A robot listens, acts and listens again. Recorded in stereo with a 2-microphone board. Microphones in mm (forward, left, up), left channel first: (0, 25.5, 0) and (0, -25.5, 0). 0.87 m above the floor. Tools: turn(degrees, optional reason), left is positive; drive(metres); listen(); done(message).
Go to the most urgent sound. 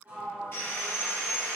listen()
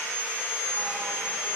listen()
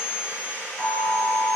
turn(degrees=55, reason="The alarm: about 55° left or 125° left.")
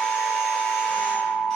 turn(degrees=55, reason="So it is at 55° left.")
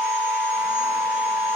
turn(degrees=-15, reason="The alarm is now 15° right.")
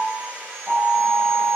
drive(metres=1.0)
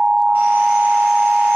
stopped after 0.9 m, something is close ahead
done("I am next to the alarm.")